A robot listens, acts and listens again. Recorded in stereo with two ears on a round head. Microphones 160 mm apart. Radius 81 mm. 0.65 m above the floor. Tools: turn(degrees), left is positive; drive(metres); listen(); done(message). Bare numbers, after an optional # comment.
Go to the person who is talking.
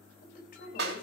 # The woman speaking: about 50° left or 130° left.
turn(50)
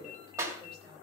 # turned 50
drive(1.0)
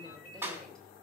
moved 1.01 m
listen()
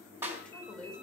drive(1.0)
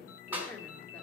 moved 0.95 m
# The woman speaking is now 10° left.
turn(10)
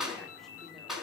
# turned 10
listen()
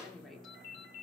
listen()
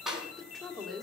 drive(1.0)
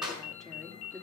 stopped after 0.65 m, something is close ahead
done("I am next to the woman speaking.")